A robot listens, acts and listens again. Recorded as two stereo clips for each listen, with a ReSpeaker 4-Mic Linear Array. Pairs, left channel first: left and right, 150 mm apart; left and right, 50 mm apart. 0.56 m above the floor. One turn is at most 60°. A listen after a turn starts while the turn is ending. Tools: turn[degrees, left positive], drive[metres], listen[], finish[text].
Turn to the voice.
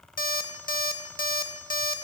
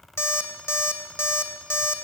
Action: listen[]
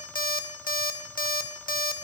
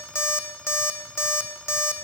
Action: listen[]
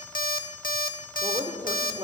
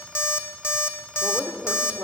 Thought: The woman speaking: about 45° right or 135° right.
Action: turn[-45]
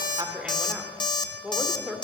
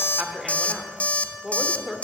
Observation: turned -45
Thought: So it is at 10° right.
Action: turn[-10]
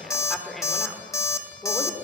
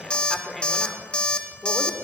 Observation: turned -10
Action: finish[Facing the woman speaking, 1 to 2 m away.]